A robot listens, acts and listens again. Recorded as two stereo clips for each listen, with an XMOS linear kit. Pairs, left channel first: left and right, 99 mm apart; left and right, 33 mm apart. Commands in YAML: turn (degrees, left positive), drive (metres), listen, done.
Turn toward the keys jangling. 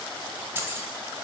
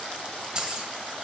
turn: -20
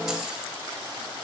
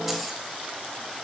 listen: true
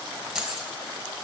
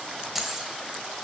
done: "Found it: keys jangling, straight ahead."